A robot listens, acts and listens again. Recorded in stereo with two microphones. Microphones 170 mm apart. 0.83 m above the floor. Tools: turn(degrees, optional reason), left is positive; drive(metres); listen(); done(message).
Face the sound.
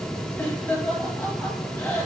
turn(degrees=30)
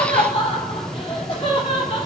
turn(degrees=145, reason="So it is at 145° left.")
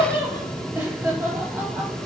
turn(degrees=-10, reason="The laughter is now 10° right.")
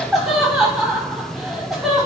done("Facing the laughter.")